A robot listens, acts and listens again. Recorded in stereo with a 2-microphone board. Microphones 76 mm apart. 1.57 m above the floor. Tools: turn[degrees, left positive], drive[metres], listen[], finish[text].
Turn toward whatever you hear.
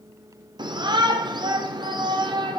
Thought: The shout: about 65° right or 115° right.
Action: turn[-65]
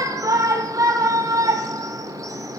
Thought: So it is at 45° right.
Action: turn[-45]
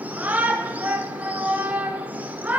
Thought: The shout is now 20° right.
Action: turn[-20]
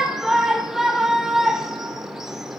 Action: finish[Facing the shout.]